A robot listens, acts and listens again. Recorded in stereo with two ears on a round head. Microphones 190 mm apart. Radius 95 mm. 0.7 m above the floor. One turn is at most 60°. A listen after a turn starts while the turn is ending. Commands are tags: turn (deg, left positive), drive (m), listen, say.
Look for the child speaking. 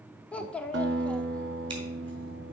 <turn deg="30"/>
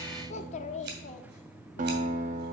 <turn deg="60"/>
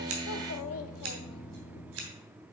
<turn deg="60"/>
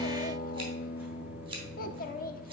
<turn deg="45"/>
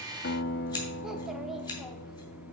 <listen/>
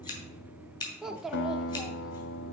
<say>Found it: a child speaking, straight ahead, under 1 m away.</say>